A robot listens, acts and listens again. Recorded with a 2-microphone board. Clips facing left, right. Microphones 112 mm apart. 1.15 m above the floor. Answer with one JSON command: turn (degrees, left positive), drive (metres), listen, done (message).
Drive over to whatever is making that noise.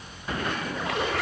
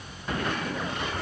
{"turn": 90}
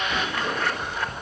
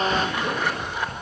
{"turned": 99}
{"turn": -15}
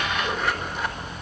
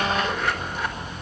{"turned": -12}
{"drive": 1.0}
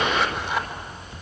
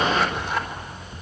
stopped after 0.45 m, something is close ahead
{"done": "Something is in my way. I am facing the zipper but have not reached it."}